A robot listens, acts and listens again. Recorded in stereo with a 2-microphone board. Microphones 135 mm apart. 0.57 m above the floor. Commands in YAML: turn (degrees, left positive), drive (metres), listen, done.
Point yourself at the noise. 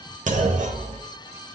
turn: -65
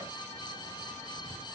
listen: true
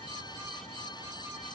done: "I heard a clunk, but can't make it out now. It was about straight ahead or 50° right."